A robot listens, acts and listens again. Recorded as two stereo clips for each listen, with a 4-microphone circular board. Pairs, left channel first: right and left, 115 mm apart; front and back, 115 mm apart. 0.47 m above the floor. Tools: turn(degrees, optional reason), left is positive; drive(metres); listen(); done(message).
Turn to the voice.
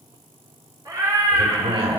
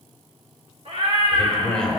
turn(degrees=80, reason="The man speaking: 80° left.")
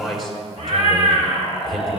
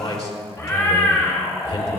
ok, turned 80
done("Found it: a man speaking, straight ahead.")